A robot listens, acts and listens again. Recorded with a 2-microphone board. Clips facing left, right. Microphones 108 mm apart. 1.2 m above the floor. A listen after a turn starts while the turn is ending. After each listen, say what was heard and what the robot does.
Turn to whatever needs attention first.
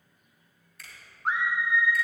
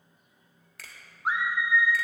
Turn 30° right.
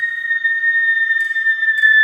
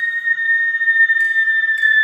So it is at 140° right. Turn 140° right.
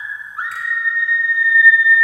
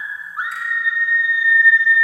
Found it: a scream, straight ahead.